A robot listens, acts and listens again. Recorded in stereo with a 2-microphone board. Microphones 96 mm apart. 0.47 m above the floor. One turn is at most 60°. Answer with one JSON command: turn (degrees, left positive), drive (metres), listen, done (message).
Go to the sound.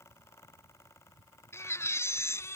{"turn": 30}
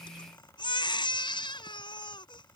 {"turn": 60}
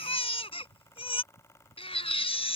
{"turn": 60}
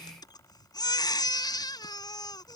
{"turn": 45}
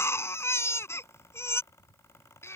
{"turn": 25}
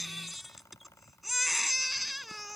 {"drive": 1.0}
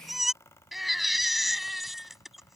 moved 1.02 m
{"drive": 1.0}
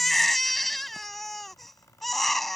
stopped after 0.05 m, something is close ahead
{"done": "Blocked. The baby crying is further on, straight ahead."}